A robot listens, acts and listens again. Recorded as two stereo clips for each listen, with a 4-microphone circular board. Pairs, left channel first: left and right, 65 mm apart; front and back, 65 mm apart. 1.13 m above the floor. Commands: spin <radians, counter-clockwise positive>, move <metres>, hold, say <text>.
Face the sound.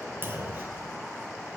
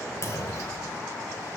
spin -0.61
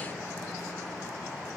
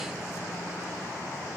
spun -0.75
say Facing where the clunk came from. I can't hear it now.